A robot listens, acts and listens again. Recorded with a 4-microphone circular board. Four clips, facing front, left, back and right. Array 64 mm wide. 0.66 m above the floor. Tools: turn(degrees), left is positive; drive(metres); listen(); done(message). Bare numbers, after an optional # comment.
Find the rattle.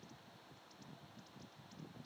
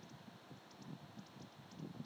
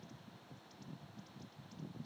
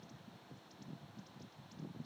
listen()
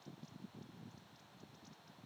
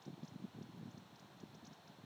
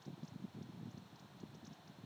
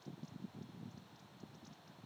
listen()
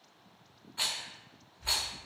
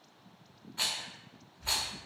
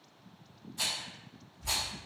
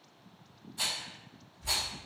# The rattle: 40° left.
turn(40)
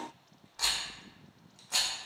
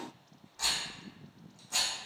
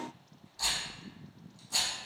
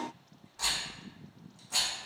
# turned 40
done("Found it: a rattle, straight ahead, under 1 m away.")